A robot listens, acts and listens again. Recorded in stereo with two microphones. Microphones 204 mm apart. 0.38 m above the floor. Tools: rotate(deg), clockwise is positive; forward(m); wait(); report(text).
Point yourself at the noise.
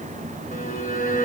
rotate(-45)
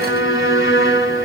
rotate(-95)
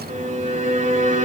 rotate(40)
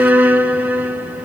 rotate(10)
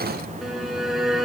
report("Found it: a violin, straight ahead, under 1 m away.")